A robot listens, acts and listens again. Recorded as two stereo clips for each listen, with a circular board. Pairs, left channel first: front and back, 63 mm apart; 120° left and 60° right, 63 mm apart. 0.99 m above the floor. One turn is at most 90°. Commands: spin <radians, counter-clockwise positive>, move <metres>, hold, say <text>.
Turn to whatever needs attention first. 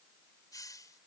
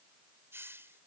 hold
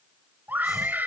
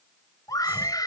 spin 1.57
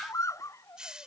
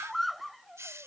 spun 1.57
spin 0.52
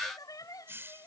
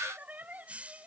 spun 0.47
say Found it: a scream, straight ahead.